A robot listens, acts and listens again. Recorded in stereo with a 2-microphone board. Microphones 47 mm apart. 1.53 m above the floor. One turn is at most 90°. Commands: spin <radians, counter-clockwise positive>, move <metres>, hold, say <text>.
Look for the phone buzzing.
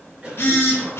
spin 0.96
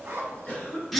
say Facing the phone buzzing.